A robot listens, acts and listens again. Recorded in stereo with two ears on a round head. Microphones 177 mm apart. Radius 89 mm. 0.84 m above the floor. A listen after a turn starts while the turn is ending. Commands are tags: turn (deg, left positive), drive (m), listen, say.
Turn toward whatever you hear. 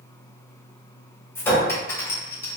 <turn deg="30"/>
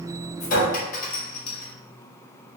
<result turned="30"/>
<turn deg="135"/>
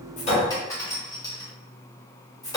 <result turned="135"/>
<turn deg="15"/>
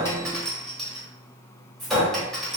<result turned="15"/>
<say>Found it: a clink, straight ahead.</say>